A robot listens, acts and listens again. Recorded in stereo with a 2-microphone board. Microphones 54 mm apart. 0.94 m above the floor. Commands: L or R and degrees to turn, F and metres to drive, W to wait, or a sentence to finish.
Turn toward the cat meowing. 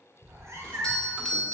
R70
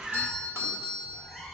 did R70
Facing the cat meowing.